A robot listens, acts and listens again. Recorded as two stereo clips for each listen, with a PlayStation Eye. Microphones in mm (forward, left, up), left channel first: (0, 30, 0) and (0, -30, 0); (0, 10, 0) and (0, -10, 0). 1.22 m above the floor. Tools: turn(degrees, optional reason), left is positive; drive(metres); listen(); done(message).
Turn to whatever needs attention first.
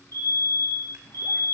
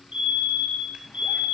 turn(degrees=-70, reason="The fire alarm: about 70° right or 110° right.")
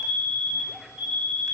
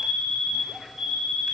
turn(degrees=-15, reason="So it is at 15° right.")
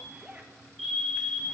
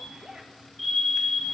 done("Found it: a fire alarm, straight ahead.")